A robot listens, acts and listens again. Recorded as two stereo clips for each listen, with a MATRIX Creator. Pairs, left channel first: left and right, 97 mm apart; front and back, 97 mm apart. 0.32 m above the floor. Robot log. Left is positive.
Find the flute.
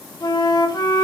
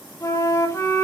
note: The flute: 55° left.
cmd yaw +55
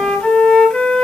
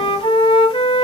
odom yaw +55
note: The flute is now 10° left.
cmd yaw +10
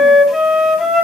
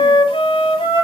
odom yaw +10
end: Facing the flute, 1 to 2 m away.